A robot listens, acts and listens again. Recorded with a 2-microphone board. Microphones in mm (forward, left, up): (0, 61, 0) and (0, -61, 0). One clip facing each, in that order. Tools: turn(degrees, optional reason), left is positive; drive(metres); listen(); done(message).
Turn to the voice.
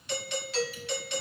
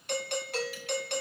listen()
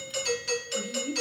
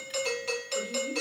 turn(degrees=-30)
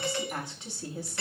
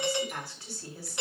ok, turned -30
turn(degrees=20, reason="So it is at 20° left.")
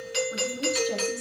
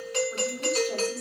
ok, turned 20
done("Facing the woman speaking.")